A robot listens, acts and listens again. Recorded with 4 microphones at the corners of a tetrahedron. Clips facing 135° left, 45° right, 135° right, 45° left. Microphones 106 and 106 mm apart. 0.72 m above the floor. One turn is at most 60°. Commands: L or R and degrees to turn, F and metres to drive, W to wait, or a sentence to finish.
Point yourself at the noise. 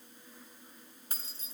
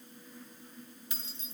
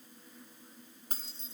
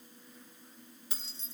R60
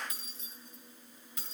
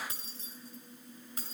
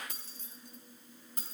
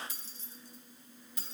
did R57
R60
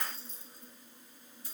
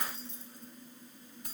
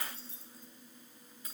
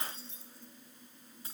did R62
R15
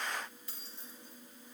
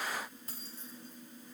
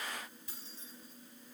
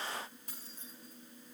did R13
Facing the keys jangling, over 4 m away.